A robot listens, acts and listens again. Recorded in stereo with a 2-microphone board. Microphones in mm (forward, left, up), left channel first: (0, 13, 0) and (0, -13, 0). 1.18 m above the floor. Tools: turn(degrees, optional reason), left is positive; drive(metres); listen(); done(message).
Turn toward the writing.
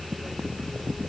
listen()
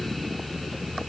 listen()
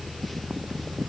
done("I can't make out writing to turn to.")